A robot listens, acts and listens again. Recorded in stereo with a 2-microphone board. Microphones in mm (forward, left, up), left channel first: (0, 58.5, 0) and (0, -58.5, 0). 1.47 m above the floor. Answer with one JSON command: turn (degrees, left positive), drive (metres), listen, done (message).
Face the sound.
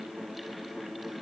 {"listen": true}
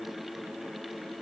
{"listen": true}
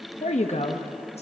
{"turn": 65}
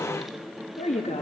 {"turn": 75}
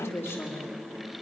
{"turn": 20}
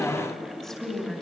{"done": "Found it: a woman speaking, straight ahead, 2 to 4 m away."}